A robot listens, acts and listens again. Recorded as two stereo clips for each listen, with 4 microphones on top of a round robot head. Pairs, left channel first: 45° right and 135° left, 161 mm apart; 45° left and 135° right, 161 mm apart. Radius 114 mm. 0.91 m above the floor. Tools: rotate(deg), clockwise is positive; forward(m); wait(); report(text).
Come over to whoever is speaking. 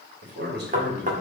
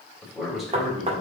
rotate(-140)
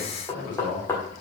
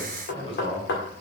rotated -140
rotate(10)
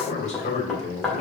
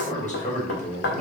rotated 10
forward(1.0)
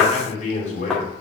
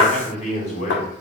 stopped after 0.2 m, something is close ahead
report("Blocked. The man speaking is further on, straight ahead.")